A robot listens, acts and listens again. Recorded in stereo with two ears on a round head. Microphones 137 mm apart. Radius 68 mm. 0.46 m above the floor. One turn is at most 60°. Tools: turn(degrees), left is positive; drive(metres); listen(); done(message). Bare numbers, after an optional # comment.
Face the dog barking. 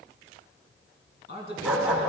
turn(-30)
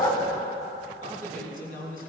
# So it is at 30° left.
turn(30)
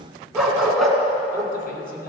done("Found it: a dog barking, straight ahead.")